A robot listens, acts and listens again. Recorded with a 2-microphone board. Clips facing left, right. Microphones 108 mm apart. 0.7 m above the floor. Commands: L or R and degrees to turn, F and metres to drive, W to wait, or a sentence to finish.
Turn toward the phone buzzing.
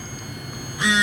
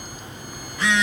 L15
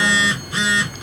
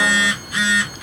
L150
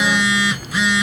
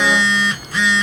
Found it: a phone buzzing, straight ahead, 1 to 2 m away.